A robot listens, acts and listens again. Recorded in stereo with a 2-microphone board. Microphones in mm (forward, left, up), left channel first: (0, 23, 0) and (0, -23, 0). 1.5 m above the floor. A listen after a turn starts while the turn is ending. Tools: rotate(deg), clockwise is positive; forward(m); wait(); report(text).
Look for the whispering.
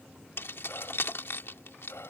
rotate(-90)
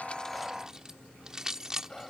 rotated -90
rotate(-15)
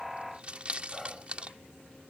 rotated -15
report("Facing the whispering.")